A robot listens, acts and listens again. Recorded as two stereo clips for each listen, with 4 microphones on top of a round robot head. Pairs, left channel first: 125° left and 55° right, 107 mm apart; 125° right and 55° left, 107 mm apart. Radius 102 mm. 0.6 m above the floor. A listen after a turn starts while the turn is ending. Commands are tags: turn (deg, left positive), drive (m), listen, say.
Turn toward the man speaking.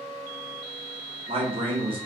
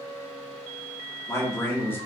<turn deg="-60"/>
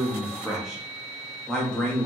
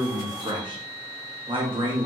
<turn deg="50"/>
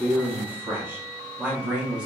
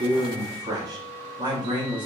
<turn deg="25"/>
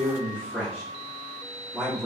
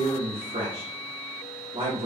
<turn deg="25"/>
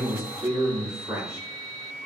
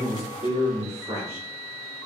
<say>Found it: a man speaking, straight ahead, 1 to 2 m away.</say>